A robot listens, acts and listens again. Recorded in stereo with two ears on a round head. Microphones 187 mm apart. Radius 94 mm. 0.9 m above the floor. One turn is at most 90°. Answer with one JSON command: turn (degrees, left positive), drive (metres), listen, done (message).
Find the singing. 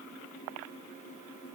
{"listen": true}
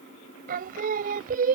{"turn": -40}
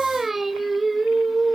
{"done": "Found it: singing, straight ahead."}